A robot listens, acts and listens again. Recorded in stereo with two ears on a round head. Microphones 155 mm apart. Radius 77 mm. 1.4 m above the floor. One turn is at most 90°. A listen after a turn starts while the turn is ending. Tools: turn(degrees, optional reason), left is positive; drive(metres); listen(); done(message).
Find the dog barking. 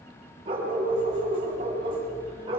turn(degrees=-30, reason="The dog barking: about 30° right or 150° right.")
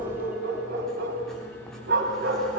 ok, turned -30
turn(degrees=-90, reason="So it is at 120° right.")
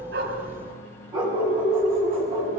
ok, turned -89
turn(degrees=-30, reason="The dog barking is now 30° right.")
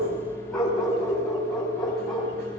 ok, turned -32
done("Found it: a dog barking, straight ahead.")